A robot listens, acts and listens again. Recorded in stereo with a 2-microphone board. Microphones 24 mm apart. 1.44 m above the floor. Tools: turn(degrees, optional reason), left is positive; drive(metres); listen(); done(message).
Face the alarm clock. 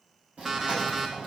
turn(degrees=-15, reason="The alarm clock: about 15° right or 165° right.")
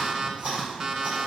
turn(degrees=-150, reason="So it is at 150° right.")
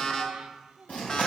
turn(degrees=35, reason="The alarm clock is now 35° left.")
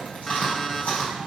turn(degrees=10, reason="The alarm clock is now 10° left.")
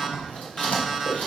done("Found it: an alarm clock, straight ahead, 1 to 2 m away.")